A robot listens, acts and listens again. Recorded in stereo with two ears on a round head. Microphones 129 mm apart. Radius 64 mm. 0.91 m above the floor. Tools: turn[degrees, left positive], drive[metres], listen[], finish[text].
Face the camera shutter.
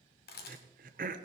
Thought: The camera shutter: about 75° left or 105° left.
Action: turn[75]
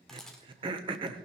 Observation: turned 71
Action: finish[Facing the camera shutter, 2 to 4 m away.]